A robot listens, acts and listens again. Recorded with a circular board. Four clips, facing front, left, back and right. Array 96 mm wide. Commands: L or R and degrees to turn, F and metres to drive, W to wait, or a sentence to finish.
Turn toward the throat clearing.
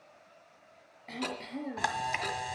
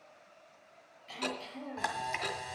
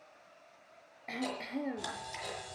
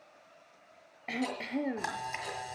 R105
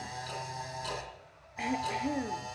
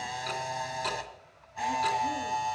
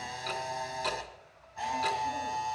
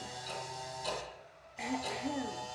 W
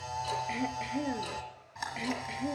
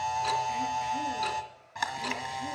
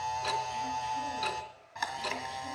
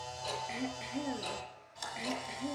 W
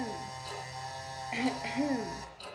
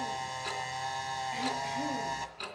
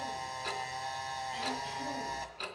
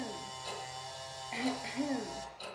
R10
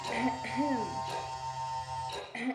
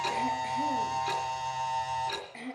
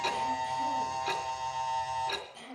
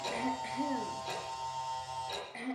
Found it: throat clearing, straight ahead, 1 to 2 m away.